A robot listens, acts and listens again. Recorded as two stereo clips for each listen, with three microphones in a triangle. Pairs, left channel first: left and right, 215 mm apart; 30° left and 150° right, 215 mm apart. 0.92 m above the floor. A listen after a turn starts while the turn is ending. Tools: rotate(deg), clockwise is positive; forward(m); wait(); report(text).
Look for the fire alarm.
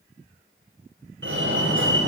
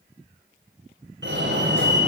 rotate(120)
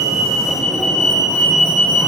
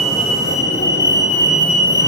report("Found it: a fire alarm, straight ahead.")